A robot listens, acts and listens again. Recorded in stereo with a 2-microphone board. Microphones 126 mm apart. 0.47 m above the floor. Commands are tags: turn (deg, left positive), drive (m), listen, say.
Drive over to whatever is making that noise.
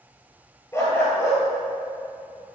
<turn deg="20"/>
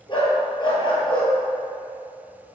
<turn deg="140"/>
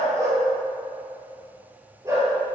<turn deg="-25"/>
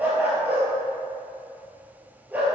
<turn deg="-15"/>
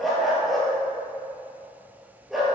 <drive m="1.0"/>
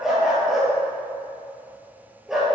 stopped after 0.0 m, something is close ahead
<say>Blocked. The dog barking is further on, straight ahead.</say>